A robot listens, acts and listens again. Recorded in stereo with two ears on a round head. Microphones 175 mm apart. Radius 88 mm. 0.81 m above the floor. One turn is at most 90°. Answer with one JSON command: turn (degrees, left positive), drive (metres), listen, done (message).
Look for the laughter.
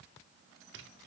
{"listen": true}
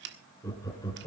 {"turn": 20}
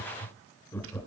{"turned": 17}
{"turn": 30}
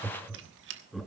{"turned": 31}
{"done": "Facing the laughter."}